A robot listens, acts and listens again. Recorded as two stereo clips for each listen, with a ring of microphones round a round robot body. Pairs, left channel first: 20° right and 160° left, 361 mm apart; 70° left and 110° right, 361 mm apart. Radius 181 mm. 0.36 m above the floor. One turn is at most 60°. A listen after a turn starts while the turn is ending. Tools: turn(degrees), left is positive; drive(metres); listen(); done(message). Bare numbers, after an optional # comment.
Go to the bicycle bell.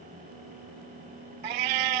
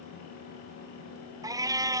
listen()
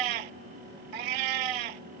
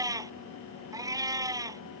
listen()
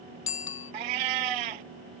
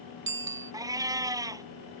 # The bicycle bell: 55° right.
turn(-55)
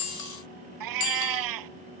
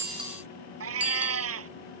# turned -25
# Nothing new. It was at 30° right.
turn(-30)
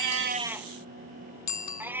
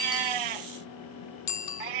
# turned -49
# The bicycle bell is now 20° left.
turn(20)
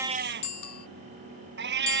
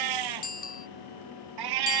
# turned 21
drive(1.0)
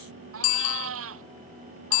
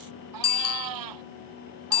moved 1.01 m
drive(1.0)
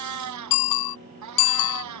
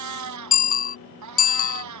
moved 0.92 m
drive(1.0)
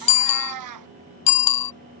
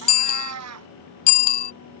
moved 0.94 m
drive(1.0)
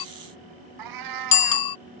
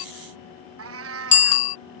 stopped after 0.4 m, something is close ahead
done("I am next to the bicycle bell.")